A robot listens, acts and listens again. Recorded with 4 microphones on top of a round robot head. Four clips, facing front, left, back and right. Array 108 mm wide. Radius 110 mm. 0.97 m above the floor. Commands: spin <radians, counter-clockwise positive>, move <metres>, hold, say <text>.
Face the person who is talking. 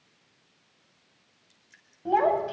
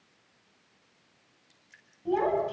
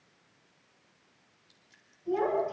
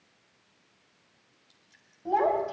spin -0.44
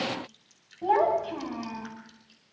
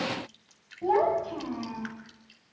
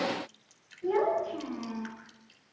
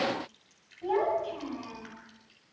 spin 0.44
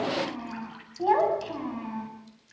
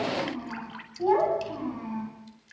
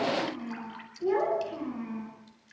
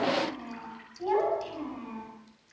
spin 0.44
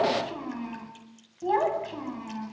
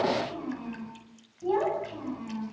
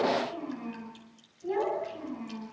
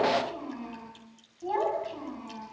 spin -0.17
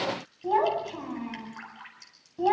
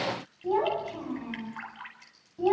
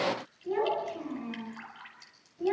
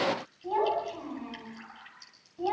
say Facing the child speaking, over 4 m away.